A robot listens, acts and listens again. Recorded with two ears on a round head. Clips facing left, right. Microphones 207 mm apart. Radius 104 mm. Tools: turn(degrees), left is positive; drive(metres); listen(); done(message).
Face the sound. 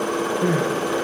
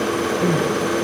turn(degrees=30)
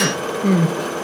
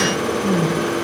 turn(degrees=145)
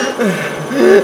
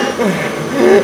turn(degrees=15)
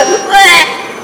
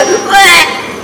done("Found it: crying, straight ahead, 1 to 2 m away.")